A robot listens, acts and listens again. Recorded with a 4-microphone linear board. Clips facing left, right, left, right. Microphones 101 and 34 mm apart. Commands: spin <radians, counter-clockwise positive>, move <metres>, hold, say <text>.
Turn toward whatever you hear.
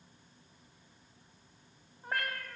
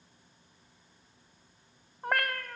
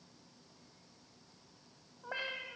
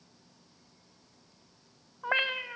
spin -1.13
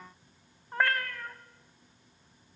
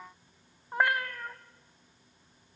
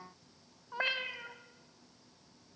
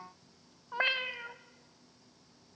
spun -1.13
spin -0.26
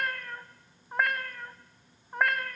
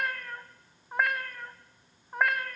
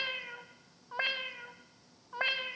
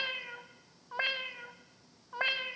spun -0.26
say Facing the cat meowing.